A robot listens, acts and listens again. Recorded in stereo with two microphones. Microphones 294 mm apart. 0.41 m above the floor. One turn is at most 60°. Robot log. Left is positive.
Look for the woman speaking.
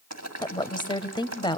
note: The woman speaking: about 15° left or 165° left.
cmd yaw +15
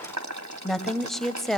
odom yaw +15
end: Facing the woman speaking.